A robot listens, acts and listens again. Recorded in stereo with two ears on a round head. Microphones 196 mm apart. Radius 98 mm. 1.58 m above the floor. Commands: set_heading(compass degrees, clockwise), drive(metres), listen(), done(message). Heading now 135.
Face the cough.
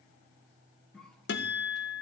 set_heading(105)
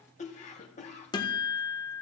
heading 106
set_heading(321)
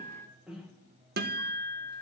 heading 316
done("Found it: a cough, straight ahead, 1 to 2 m away.")